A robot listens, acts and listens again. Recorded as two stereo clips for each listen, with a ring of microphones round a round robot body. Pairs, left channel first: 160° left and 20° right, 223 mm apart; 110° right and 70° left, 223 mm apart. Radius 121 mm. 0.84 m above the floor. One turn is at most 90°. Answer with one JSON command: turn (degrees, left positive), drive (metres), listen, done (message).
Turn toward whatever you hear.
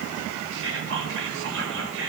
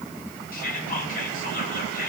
{"turn": -60}
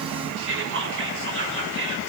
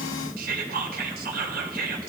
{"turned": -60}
{"turn": 15}
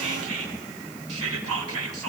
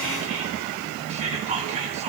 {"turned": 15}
{"done": "Facing the whispering."}